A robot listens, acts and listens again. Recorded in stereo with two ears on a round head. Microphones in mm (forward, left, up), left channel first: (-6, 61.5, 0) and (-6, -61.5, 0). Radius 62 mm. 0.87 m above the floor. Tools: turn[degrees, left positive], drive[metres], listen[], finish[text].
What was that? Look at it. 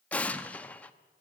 Action: turn[30]
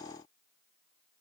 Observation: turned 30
Action: listen[]
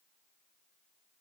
Action: finish[I heard an explosion, but can't make it out now. It was about 20° right or 140° left.]